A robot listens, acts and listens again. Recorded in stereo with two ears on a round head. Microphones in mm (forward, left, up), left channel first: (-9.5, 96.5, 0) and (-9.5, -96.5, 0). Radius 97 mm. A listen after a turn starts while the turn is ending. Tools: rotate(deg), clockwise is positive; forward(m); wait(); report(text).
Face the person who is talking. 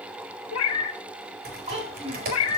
rotate(30)
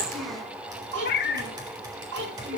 rotate(115)
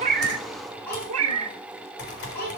rotate(-10)
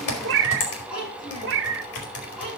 report("Found it: a child speaking, straight ahead, over 4 m away.")